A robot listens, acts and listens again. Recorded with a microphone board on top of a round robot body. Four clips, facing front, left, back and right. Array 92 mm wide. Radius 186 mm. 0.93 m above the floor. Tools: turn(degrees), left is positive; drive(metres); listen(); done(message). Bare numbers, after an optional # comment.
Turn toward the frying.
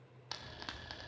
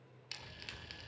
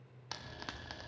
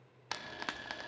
# The frying: 95° right.
turn(-95)
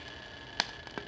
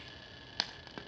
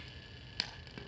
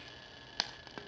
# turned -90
done("Facing the frying.")